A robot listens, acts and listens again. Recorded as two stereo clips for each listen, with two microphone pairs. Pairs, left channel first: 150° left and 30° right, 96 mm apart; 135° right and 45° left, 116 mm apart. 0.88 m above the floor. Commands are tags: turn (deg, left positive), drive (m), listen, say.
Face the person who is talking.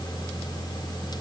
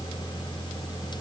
<listen/>
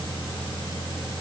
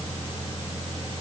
<listen/>
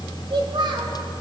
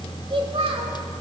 <say>Found it: a child speaking, straight ahead.</say>